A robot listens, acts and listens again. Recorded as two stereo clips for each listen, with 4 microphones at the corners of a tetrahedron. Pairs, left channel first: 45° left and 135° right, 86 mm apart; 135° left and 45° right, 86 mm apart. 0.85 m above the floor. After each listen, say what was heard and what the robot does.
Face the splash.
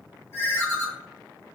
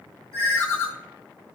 Keep listening.
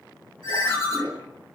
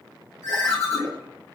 The splash: 145° right. Turn 145° right.
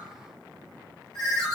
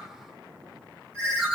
Facing where the splash came from. I can't hear it now.